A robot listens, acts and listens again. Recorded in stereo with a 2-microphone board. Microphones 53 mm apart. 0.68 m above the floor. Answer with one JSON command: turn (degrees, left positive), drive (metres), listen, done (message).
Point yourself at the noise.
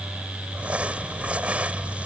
{"turn": -25}
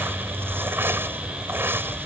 {"turn": -125}
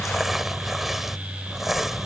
{"done": "Facing the crumpling."}